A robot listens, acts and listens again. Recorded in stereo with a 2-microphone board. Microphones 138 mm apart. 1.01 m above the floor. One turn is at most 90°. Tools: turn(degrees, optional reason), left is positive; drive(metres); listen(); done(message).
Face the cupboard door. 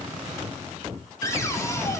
turn(degrees=20, reason="The cupboard door: about 20° left or 160° left.")
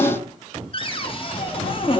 turn(degrees=90, reason="So it is at 140° left.")
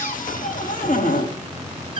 turn(degrees=80, reason="The cupboard door is now 80° left.")
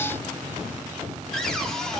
done("Facing the cupboard door, 1 to 2 m away.")